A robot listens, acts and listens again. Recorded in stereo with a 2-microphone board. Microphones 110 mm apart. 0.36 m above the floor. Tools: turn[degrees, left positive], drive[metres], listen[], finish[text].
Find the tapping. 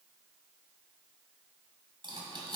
Action: listen[]
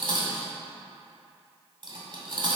Action: listen[]
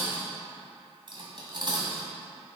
Action: finish[I can't make out tapping, only cutlery clinking.]